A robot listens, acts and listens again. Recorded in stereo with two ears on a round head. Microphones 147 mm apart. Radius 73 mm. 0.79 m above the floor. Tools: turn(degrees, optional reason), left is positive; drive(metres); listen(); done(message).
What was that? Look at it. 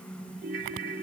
turn(degrees=-60, reason="The ringtone: about 60° right or 120° right.")
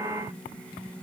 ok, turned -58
listen()
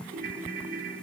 turn(degrees=-60, reason="So it is at 60° right.")
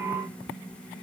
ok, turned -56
listen()
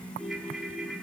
done("Found it: a ringtone, straight ahead.")